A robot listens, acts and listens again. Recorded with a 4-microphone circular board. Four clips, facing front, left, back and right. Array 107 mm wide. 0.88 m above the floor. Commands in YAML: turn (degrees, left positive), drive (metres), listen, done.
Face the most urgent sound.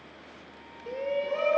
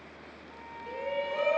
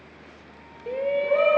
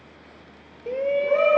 turn: -120
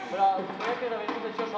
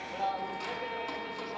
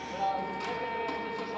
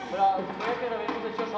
turn: -45
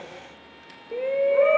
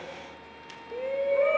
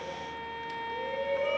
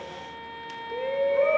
done: "Facing the shout, 1 to 2 m away."